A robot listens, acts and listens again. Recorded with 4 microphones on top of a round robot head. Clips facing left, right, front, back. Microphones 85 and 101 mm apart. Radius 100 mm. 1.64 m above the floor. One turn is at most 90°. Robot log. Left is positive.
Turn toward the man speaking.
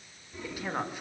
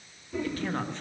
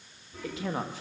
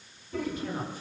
note: The man speaking: 10° left.
cmd yaw +10
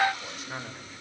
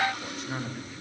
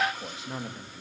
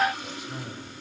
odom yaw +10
end: Facing the man speaking.